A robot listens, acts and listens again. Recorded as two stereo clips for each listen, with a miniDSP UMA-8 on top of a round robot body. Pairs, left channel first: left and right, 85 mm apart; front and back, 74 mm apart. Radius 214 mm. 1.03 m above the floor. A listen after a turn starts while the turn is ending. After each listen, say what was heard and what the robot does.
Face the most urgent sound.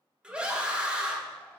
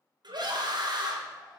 The scream: 165° right. Turn 165° right.
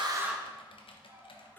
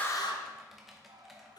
Keep listening.
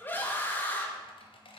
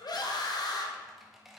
The scream is now 25° left. Turn 25° left.
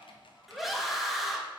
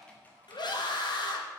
Found it: a scream, straight ahead.